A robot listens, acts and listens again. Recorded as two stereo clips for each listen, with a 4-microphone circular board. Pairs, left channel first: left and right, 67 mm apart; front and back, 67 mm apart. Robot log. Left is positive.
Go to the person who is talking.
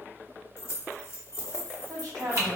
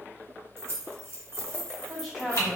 note: The woman speaking: 90° right.
cmd yaw -90
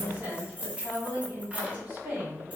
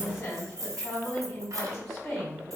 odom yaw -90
note: The woman speaking is now 25° right.
cmd yaw -25
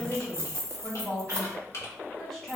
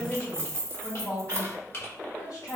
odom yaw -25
cmd fwd 1.0
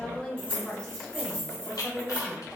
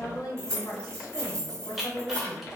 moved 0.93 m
note: The woman speaking is now 10° left.
cmd yaw +10
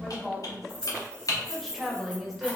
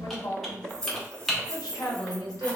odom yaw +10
cmd fwd 1.0
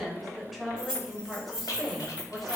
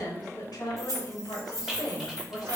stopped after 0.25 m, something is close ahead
end: I am next to the woman speaking.